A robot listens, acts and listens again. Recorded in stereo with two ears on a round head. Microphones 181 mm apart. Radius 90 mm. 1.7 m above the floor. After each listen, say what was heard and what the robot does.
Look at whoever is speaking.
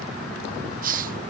Keep listening.
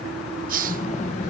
The child speaking: about 35° left or 145° left. Turn 35° left.
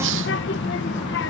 So it is at 105° left. Turn 105° left.
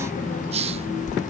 The child speaking is now 45° left. Turn 45° left.
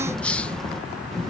Found it: a child speaking, straight ahead.